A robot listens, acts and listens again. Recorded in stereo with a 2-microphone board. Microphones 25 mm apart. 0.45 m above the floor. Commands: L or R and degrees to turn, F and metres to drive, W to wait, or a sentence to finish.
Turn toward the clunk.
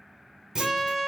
R30
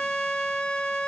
W
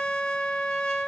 I heard a clunk, but can't make it out now. It was about straight ahead or 120° right.